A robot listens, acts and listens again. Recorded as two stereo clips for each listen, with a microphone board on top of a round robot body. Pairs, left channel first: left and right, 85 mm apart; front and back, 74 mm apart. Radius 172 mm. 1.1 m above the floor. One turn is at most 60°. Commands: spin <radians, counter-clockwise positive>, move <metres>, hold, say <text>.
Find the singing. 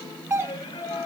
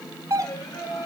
spin 0.70
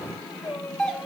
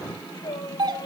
say Found it: singing, straight ahead, over 4 m away.